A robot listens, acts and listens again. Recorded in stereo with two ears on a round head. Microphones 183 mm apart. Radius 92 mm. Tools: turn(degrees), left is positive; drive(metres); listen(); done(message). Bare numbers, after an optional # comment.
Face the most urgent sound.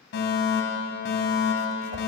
# The fire alarm: about 55° left or 125° left.
turn(55)
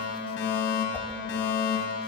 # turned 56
# So it is at 65° left.
turn(65)
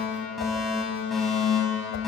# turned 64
done("Facing the fire alarm.")